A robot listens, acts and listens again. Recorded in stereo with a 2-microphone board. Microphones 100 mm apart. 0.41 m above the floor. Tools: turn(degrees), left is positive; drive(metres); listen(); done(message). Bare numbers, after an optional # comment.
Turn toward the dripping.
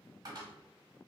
listen()
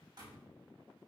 listen()
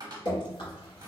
# The dripping: about 50° left or 130° left.
turn(50)
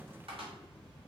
listen()
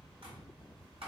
listen()
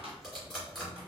done("Facing the dripping, 1 to 2 m away.")